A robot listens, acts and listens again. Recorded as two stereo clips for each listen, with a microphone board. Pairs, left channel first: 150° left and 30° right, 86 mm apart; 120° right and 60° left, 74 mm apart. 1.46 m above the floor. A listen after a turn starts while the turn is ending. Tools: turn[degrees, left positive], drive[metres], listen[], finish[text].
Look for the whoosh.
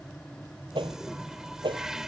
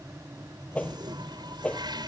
Thought: The whoosh: 50° right.
Action: turn[-50]
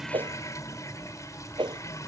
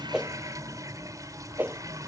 Action: finish[Found it: a whoosh, straight ahead.]